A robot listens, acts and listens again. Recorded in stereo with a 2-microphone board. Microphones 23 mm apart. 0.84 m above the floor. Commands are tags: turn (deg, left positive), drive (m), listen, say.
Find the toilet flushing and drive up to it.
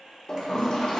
<turn deg="30"/>
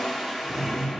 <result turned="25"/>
<drive m="1.0"/>
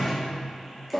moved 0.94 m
<drive m="1.0"/>
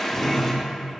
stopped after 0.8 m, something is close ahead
<turn deg="20"/>
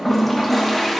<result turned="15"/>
<turn deg="10"/>
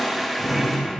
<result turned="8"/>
<say>Arrived at the toilet flushing, straight ahead.</say>